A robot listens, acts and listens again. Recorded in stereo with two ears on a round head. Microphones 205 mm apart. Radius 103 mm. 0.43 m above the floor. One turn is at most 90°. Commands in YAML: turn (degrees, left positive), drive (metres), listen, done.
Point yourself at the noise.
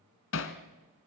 turn: 65
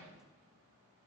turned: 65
listen: true
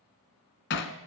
turn: 50
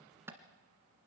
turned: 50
turn: -10
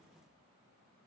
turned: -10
listen: true
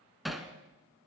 done: "Found it: hammering, straight ahead, 1 to 2 m away."